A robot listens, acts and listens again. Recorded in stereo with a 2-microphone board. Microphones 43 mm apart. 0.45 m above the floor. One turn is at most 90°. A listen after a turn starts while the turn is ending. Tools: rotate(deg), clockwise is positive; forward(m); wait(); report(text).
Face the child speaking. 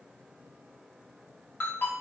wait()
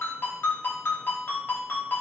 wait()
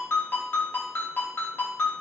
report("I can't make out a child speaking, only a ringtone.")